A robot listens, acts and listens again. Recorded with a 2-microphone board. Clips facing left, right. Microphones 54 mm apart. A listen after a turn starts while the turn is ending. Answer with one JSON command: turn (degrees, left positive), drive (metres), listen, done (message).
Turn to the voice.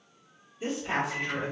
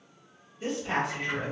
{"turn": 30}
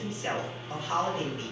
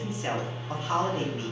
{"turn": -40}
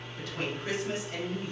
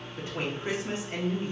{"turn": -40}
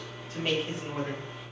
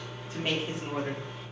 {"turn": -10}
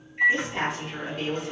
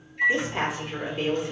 {"turn": -15}
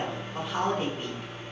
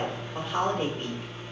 {"done": "Found it: a woman speaking, straight ahead."}